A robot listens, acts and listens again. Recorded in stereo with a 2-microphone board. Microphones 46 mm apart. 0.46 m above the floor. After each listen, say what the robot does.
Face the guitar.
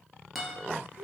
Turn 30° right.
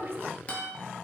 Turn 30° left.
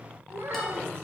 Keep listening.
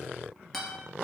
Facing the guitar, 1 to 2 m away.